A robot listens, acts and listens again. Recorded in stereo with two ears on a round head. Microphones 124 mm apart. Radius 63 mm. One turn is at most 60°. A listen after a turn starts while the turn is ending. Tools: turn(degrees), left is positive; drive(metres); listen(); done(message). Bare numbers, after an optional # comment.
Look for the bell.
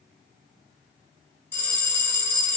turn(30)
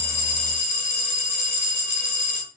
# So it is at 135° left.
turn(60)
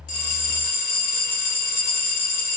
# The bell is now 75° left.
turn(60)
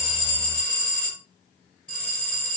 # The bell is now 10° left.
turn(10)
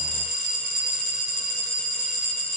done("Found it: a bell, straight ahead.")